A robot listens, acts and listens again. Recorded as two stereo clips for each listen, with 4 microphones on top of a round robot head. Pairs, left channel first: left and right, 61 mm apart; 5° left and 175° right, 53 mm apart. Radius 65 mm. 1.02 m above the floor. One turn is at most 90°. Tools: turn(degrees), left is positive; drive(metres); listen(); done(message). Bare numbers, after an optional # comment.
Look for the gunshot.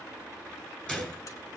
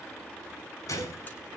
# The gunshot: 15° left.
turn(15)
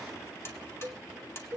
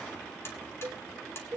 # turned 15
done("Facing where the gunshot came from. I can't hear it now.")